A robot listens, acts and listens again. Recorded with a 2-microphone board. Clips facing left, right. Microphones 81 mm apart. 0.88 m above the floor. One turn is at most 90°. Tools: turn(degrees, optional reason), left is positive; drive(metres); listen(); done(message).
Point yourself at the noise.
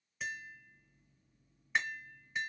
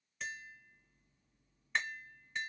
turn(degrees=30)
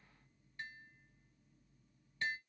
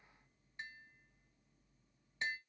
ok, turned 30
turn(degrees=-25, reason="So it is at 25° right.")
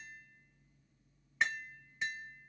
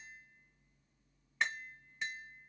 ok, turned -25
done("Found it: tapping, straight ahead.")